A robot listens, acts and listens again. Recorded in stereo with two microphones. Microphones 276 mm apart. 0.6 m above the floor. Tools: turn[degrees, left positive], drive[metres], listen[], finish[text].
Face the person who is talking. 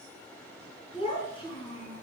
Thought: The child speaking: about 15° left or 165° left.
Action: turn[15]
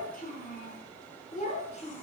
Thought: The child speaking: about 25° left or 155° left.
Action: turn[25]
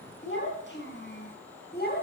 Thought: The child speaking: about 35° left or 145° left.
Action: turn[35]
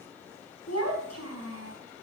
Thought: So it is at 115° left.
Action: turn[115]
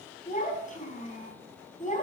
Thought: The child speaking is now 30° left.
Action: turn[30]
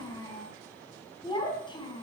Thought: The child speaking is now 15° left.
Action: turn[15]
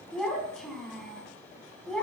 Action: finish[Found it: a child speaking, straight ahead.]